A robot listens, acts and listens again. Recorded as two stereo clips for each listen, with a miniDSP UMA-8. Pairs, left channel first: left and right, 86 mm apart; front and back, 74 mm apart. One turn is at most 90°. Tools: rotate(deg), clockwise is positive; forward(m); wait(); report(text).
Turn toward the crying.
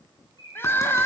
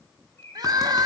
rotate(-90)
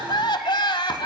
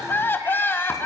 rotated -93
rotate(-60)
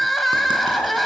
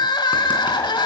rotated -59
report("Facing the crying.")